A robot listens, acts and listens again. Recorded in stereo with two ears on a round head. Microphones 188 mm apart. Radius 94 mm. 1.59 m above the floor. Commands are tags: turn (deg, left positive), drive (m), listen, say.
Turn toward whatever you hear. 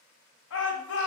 <turn deg="65"/>
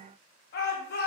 <turn deg="50"/>
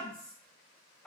<say>Facing the shout.</say>